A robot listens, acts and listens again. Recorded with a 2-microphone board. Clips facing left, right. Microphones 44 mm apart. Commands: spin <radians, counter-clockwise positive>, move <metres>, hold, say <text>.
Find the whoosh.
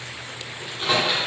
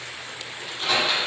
hold
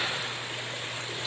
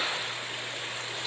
hold
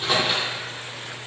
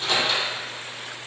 say I can't make out a whoosh to turn to.